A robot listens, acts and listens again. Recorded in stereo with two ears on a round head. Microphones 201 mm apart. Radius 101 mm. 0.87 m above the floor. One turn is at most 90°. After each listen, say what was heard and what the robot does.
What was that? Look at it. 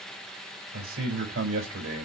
The man speaking: about 60° right or 120° right. Turn 60° right.
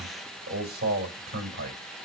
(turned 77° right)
So it is at 40° right. Turn 40° right.
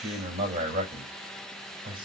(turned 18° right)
The man speaking is now 20° right. Turn 20° right.
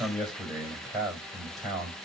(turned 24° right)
Found it: a man speaking, straight ahead.